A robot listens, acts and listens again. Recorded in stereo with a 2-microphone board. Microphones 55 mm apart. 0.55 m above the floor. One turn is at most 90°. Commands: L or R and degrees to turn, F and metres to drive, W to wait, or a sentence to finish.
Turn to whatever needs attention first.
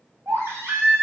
R60
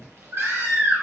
R60
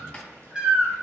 R20
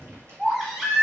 R10
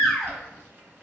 Facing the baby crying.